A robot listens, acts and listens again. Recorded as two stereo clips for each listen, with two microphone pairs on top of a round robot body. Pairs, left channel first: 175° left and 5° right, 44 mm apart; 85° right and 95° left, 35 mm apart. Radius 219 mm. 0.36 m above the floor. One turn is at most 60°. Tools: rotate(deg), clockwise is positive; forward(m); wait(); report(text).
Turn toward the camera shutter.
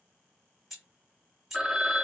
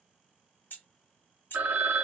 wait()
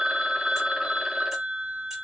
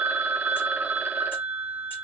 wait()
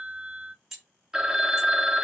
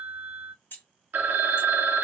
report("I can't make out a camera shutter to turn to.")